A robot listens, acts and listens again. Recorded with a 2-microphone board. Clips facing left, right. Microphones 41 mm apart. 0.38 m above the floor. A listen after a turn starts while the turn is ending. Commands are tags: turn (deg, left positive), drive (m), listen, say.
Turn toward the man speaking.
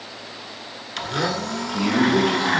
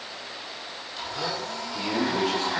<turn deg="30"/>
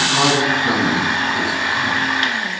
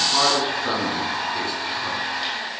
<turn deg="-10"/>
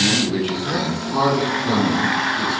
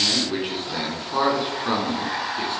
<turn deg="-20"/>
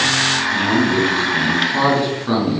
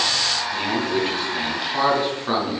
<say>Found it: a man speaking, straight ahead.</say>